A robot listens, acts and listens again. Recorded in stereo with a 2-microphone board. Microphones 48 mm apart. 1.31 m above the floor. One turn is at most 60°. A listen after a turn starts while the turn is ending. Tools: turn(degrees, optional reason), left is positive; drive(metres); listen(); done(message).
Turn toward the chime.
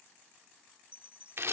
turn(degrees=-30, reason="The chime: about 30° right or 150° right.")
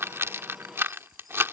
listen()
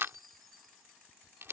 done("Found it: a chime, straight ahead.")